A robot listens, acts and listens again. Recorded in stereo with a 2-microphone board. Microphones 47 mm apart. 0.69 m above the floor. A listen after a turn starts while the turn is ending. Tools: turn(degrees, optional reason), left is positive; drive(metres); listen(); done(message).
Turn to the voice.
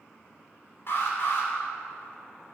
listen()
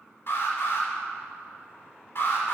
listen()
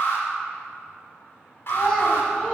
turn(degrees=30)
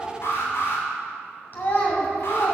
turn(degrees=140, reason="So it is at 140° left.")
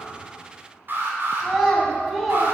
done("Facing the child speaking, 2 to 4 m away.")